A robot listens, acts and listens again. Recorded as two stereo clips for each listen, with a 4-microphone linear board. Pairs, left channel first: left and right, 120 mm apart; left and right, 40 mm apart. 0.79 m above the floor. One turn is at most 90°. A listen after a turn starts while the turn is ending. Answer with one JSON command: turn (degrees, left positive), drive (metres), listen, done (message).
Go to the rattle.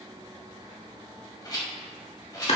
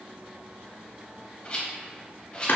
{"turn": 35}
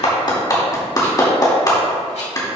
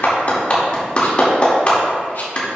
{"listen": true}
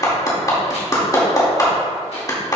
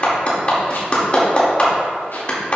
{"listen": true}
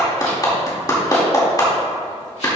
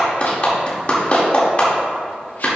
{"done": "I heard a rattle, but can't make it out now. It was about straight ahead or 110° left. I did not reach it."}